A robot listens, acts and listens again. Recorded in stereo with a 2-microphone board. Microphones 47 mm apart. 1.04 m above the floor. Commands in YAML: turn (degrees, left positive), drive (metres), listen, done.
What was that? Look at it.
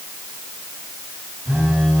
turn: -65
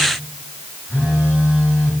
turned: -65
turn: -50
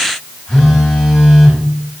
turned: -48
done: "Found it: a phone buzzing, straight ahead."